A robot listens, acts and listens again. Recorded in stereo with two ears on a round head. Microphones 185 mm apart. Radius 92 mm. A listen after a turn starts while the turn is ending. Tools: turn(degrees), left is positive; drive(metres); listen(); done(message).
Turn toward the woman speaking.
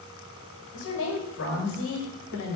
turn(degrees=65)
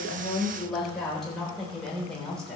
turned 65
done("Found it: a woman speaking, straight ahead.")